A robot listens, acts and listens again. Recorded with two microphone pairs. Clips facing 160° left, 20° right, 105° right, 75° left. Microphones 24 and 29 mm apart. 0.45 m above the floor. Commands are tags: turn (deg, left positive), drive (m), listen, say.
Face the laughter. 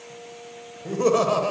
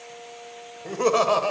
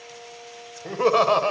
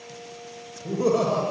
<turn deg="-95"/>
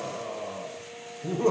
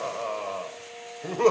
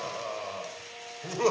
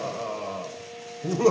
<turn deg="-30"/>
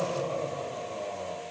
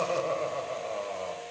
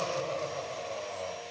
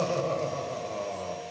<turn deg="-25"/>
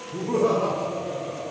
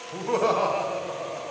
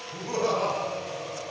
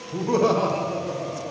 <turn deg="-10"/>
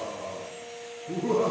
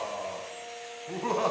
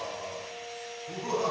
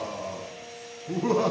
<say>Found it: laughter, straight ahead.</say>